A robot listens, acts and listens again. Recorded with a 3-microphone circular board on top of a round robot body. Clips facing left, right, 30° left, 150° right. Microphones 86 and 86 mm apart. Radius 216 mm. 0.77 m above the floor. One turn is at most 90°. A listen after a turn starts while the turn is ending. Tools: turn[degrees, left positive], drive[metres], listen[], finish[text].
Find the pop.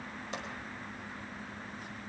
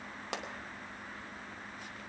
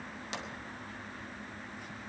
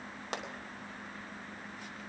Thought: The pop: 105° right.
Action: turn[-90]
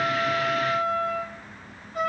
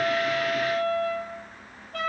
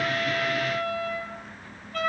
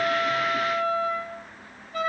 Thought: Nothing new. It was at 15° right.
Action: turn[-15]
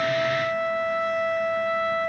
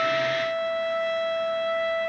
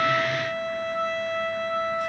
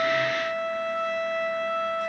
Action: finish[I heard a pop from this way, but can't make it out now.]